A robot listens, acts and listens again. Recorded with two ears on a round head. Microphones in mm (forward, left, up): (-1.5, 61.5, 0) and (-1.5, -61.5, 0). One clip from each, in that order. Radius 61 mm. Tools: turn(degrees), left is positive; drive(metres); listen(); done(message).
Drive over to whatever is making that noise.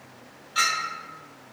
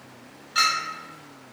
turn(degrees=-35)
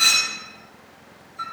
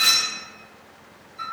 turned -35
drive(metres=1.0)
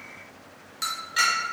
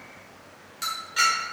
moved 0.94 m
drive(metres=1.0)
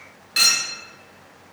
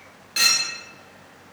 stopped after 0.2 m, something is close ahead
turn(degrees=10)
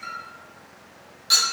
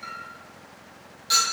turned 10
done("I am next to the clink.")